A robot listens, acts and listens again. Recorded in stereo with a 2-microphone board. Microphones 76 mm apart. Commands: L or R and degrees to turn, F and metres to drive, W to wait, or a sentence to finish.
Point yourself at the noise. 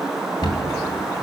L75
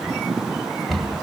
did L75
Found it: a cupboard door, straight ahead, 2 to 4 m away.